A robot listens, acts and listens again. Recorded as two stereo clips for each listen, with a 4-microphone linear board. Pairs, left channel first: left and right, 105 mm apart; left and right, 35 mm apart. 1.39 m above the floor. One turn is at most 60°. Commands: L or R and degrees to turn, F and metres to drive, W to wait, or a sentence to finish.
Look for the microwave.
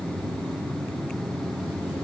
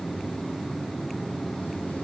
W
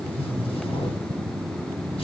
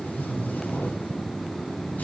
W
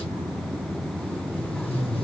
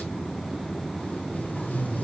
I can't make out a microwave to turn to.